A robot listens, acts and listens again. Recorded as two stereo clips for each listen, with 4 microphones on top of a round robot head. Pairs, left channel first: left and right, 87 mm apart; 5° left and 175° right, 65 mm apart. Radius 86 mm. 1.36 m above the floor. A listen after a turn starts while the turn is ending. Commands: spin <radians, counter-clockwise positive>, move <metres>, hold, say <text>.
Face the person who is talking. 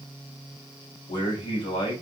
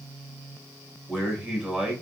spin 2.01
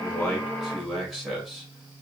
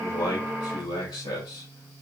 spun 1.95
say Facing the man speaking, 2 to 4 m away.